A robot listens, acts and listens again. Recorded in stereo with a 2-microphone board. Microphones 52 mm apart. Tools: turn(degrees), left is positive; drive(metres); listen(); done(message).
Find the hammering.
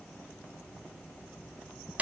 listen()
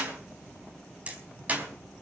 turn(degrees=-25)
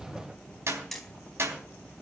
done("Facing the hammering.")